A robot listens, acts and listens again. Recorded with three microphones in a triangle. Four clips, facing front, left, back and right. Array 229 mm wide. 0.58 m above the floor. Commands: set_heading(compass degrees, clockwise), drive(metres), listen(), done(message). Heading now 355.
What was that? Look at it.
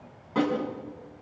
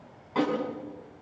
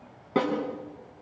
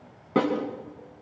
set_heading(120)
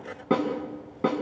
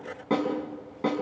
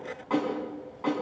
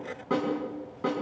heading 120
set_heading(110)
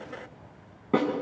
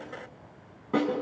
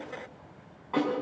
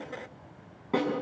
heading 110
done("Found it: a snare drum, straight ahead, over 4 m away.")